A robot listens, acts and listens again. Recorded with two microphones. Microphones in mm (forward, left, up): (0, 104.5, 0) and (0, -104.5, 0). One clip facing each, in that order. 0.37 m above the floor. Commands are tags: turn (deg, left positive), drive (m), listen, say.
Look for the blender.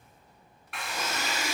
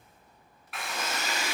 <turn deg="-60"/>
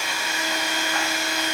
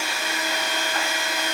<turn deg="-55"/>
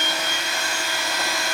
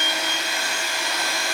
<turn deg="-15"/>
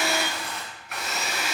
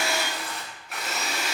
<say>Found it: a blender, straight ahead, under 1 m away.</say>